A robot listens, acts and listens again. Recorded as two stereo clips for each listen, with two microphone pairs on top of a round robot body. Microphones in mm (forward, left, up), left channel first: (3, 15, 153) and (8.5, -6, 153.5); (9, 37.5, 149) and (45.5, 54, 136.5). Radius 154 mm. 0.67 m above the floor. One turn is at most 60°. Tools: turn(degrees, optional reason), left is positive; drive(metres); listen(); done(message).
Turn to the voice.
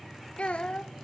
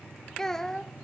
turn(degrees=60, reason="The child speaking: 115° left.")
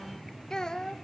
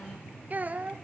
turn(degrees=50, reason="The child speaking is now 50° left.")
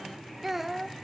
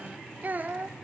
done("Facing the child speaking, 1 to 2 m away.")